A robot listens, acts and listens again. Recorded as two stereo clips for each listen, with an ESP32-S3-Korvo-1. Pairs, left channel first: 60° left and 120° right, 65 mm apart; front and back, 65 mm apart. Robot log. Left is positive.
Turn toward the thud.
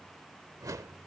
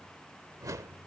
cmd idle
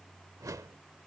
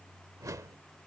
cmd idle
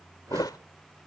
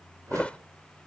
note: The thud: 75° left.
cmd yaw +75
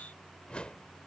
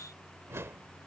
end: I heard a thud from this way, but can't make it out now.